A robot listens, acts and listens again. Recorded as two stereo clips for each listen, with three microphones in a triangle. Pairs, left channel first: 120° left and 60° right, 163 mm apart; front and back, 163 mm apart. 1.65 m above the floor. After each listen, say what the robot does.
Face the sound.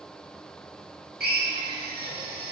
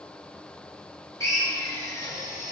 Turn 70° right.
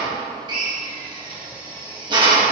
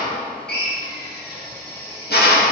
Facing the drill, 1 to 2 m away.